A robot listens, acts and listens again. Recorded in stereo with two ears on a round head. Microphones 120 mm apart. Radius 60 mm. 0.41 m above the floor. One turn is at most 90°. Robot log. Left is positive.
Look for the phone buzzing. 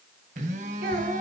note: The phone buzzing: about 60° right or 120° right.
cmd yaw -60
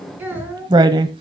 cmd idle
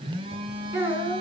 note: So it is at 45° right.
cmd yaw -45
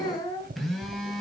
end: Facing the phone buzzing, 2 to 4 m away.